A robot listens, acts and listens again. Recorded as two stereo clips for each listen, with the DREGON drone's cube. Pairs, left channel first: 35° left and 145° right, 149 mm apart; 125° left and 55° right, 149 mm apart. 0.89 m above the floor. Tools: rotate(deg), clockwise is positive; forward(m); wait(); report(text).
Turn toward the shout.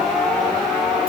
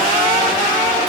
wait()
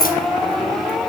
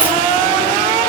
wait()
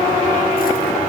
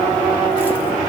report("I can't make out a shout.")